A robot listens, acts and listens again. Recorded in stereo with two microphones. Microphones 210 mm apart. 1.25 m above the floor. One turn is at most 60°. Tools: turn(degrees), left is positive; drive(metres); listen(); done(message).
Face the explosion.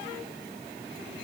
listen()
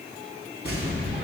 turn(degrees=50)
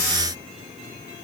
listen()
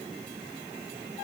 done("I heard an explosion, but can't make it out now. It was about straight ahead or 80° left.")